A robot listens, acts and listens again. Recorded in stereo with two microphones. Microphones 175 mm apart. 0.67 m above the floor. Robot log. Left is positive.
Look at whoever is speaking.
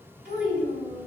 cmd yaw -90
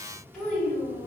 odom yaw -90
end: Facing the child speaking, 1 to 2 m away.